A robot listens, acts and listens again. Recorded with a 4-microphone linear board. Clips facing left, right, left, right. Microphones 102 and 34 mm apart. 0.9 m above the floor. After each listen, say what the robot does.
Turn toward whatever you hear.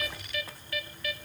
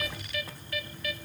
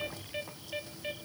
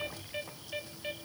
Keep listening.
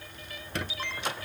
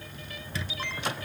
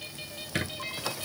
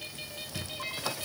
Turn 65° left.
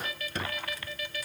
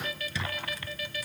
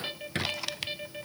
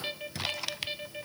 Turn 50° left.
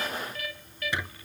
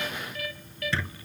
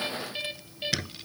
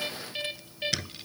Turn 15° left.
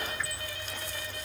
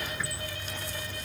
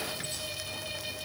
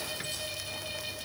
Found it: a squeak, straight ahead.